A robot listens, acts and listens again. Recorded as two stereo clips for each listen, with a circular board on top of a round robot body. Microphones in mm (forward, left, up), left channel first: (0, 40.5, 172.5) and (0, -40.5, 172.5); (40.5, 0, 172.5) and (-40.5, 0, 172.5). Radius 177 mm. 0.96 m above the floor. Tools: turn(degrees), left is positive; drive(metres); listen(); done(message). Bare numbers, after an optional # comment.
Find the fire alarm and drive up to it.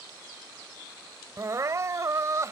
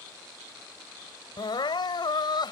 listen()
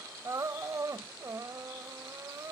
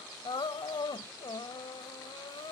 listen()
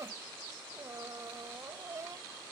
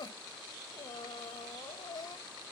done("I can't make out a fire alarm to turn to.")